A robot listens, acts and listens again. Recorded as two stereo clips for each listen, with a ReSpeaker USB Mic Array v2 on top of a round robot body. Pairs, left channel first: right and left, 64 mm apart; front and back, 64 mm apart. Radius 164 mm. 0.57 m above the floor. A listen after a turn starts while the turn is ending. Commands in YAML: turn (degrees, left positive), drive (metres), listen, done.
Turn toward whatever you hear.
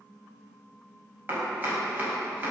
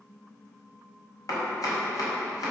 turn: 30
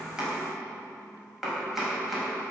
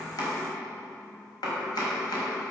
done: "Facing the chopping."